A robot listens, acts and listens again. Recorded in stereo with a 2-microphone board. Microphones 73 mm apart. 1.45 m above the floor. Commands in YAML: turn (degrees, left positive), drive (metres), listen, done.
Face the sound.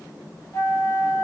turn: 40
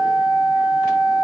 turn: 100
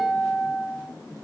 turn: 25
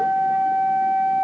turn: -15
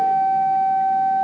done: "Facing the flute, 1 to 2 m away."